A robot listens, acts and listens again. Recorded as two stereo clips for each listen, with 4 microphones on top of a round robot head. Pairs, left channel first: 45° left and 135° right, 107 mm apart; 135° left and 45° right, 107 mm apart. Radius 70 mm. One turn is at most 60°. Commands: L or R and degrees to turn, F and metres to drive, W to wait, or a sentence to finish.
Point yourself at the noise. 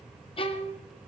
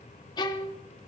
L60
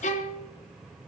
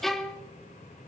L50
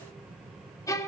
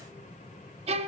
R20
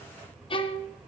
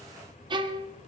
Facing the violin, 1 to 2 m away.